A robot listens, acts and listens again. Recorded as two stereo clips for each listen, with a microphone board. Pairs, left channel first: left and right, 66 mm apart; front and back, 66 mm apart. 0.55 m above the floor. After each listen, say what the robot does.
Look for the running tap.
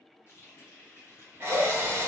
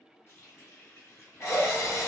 Turn 45° left.
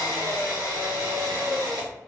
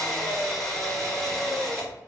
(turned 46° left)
Keep listening.
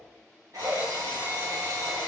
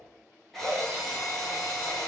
Keep listening.
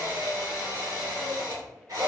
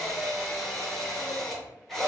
Facing where the running tap came from. I can't hear it now.